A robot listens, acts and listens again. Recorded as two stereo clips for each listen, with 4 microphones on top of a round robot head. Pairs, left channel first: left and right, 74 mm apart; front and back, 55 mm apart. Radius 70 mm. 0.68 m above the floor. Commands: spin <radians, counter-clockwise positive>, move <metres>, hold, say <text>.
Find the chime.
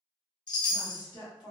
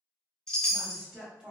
spin 1.40
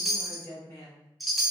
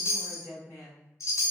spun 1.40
say Facing the chime.